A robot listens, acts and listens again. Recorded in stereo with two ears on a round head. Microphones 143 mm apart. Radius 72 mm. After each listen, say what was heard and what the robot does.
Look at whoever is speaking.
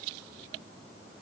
Keep listening.
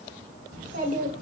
The child speaking: about 45° right or 135° right. Turn 45° right.
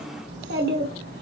So it is at 120° right. Turn 120° right.
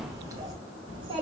The child speaking is now 35° right. Turn 35° right.
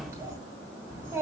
The child speaking is now 15° right. Turn 15° right.
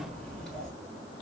Found it: a child speaking, straight ahead.